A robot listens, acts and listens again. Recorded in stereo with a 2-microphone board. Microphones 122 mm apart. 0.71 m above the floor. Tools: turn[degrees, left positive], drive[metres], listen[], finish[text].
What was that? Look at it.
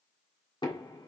Thought: The knocking: about 40° left or 140° left.
Action: turn[40]
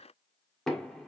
Action: finish[Facing the knocking, 1 to 2 m away.]